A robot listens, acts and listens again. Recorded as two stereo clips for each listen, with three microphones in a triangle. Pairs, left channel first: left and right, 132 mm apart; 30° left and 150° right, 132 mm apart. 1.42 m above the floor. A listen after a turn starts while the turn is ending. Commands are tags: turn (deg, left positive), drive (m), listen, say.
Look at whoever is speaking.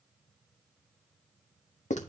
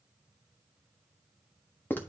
<listen/>
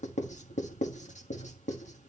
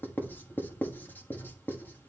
<listen/>
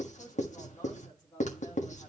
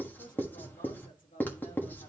<turn deg="30"/>
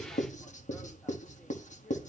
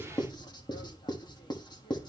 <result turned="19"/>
<turn deg="10"/>
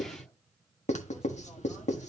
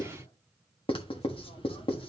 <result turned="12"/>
<listen/>
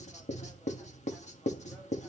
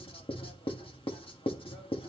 <say>Facing where the woman speaking came from. I can't hear it now.</say>